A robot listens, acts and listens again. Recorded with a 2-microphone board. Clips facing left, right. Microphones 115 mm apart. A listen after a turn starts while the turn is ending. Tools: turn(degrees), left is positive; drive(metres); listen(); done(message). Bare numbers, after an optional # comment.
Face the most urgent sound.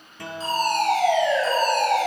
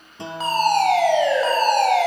# The fire alarm: about 75° right or 105° right.
turn(-75)
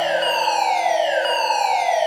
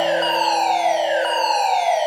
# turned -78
# So it is at 15° right.
turn(-15)
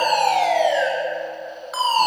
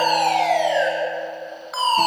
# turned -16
done("Found it: a fire alarm, straight ahead, over 4 m away.")